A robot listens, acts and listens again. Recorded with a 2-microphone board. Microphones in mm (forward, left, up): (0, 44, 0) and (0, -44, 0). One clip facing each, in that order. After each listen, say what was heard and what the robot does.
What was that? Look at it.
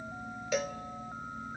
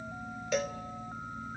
Turn 30° left.
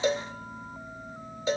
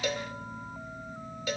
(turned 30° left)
So it is at 150° left. Turn 150° left.
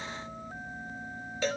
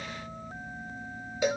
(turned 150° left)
The cowbell is now 15° right. Turn 15° right.
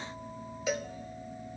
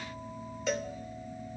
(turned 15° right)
Facing the cowbell, 1 to 2 m away.